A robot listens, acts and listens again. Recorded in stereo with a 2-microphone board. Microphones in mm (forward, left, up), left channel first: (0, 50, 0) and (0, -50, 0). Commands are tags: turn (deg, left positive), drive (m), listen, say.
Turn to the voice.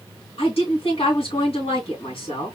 <turn deg="90"/>
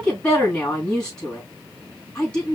<turn deg="10"/>
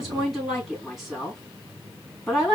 <say>Found it: a woman speaking, straight ahead, 2 to 4 m away.</say>